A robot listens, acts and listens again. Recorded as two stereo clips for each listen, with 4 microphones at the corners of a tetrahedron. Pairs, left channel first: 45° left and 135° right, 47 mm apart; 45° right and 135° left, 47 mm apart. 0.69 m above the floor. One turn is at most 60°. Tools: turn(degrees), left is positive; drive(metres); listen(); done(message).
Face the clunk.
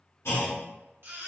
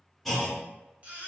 turn(degrees=40)
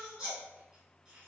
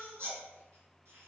done("Facing where the clunk came from. I can't hear it now.")